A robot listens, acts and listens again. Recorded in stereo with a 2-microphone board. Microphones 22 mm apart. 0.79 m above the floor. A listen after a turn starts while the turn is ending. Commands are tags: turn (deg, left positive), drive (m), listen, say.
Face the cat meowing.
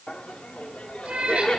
<turn deg="-90"/>
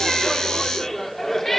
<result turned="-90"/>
<turn deg="10"/>
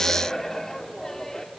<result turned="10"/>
<listen/>
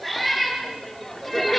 <say>Found it: a cat meowing, straight ahead, over 4 m away.</say>